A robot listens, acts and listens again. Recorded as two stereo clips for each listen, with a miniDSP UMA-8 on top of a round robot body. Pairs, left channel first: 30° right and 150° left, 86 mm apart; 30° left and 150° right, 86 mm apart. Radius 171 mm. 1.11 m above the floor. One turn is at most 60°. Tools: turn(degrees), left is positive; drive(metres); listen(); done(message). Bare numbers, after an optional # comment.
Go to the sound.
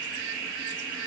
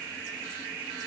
listen()
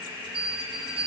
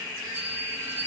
# The bell: 145° left.
turn(60)
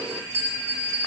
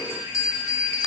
# The bell is now 85° left.
turn(60)
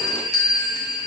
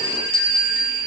# The bell is now 10° left.
turn(10)
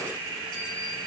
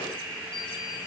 listen()
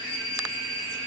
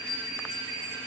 drive(1.0)
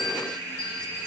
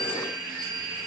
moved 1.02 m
listen()
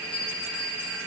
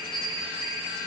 drive(1.0)
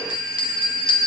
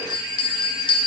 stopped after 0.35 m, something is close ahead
done("Arrived at the bell, straight ahead.")